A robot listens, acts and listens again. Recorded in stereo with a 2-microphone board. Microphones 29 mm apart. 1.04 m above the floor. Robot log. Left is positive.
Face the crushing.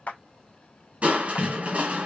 note: The crushing: about 55° right or 125° right.
cmd yaw -55
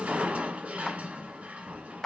note: So it is at 65° right.
cmd yaw -65
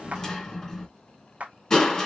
note: The crushing is now 20° left.
cmd yaw +20
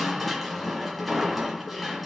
end: Found it: crushing, straight ahead.